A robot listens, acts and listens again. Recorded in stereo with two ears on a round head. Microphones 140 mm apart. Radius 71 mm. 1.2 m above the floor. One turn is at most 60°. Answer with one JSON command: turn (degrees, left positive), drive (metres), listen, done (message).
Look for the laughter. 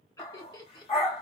{"turn": 25}
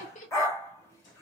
{"turn": 60}
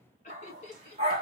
{"turn": 40}
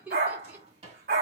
{"turn": -10}
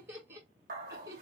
{"turn": -20}
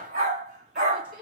{"done": "Facing the laughter."}